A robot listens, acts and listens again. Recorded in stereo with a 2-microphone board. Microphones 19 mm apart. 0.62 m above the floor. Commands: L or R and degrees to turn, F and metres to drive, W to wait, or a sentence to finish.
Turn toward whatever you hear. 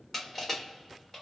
L30
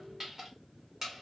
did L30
R25
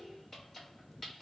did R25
L10
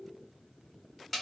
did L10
Facing the crushing.